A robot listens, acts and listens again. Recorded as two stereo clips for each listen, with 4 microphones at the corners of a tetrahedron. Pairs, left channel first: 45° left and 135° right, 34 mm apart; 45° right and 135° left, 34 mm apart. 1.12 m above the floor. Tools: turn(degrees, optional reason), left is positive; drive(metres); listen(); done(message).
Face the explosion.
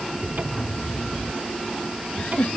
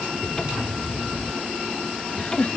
turn(degrees=170, reason="The explosion: 170° left.")
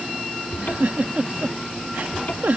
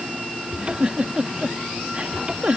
done("Facing where the explosion came from. I can't hear it now.")